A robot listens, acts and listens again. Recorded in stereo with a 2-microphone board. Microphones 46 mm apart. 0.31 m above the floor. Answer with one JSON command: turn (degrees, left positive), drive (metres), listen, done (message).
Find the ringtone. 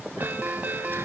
{"turn": -45}
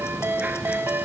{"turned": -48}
{"turn": -80}
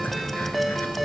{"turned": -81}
{"done": "Found it: a ringtone, straight ahead."}